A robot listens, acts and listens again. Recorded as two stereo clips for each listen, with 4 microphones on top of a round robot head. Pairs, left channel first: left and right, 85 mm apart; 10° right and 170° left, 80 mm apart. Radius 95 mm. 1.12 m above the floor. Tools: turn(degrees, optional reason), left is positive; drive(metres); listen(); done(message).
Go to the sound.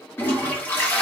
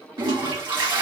turn(degrees=160, reason="The toilet flushing: 160° left.")
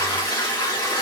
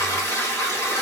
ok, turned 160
turn(degrees=40, reason="The toilet flushing is now 40° left.")
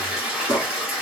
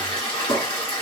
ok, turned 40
turn(degrees=-10, reason="The toilet flushing is now 10° right.")
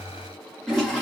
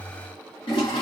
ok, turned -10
drive(metres=1.0)
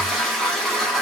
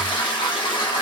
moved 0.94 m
drive(metres=1.0)
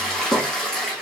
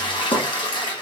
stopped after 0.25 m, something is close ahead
done("Arrived at the toilet flushing, straight ahead.")